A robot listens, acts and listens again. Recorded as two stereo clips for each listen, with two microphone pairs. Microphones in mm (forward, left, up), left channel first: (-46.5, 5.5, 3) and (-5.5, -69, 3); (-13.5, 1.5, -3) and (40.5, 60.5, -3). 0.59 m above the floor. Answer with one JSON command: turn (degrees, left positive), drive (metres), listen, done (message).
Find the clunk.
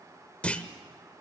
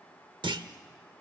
{"turn": 45}
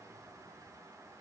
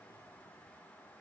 {"done": "Facing where the clunk came from. I can't hear it now."}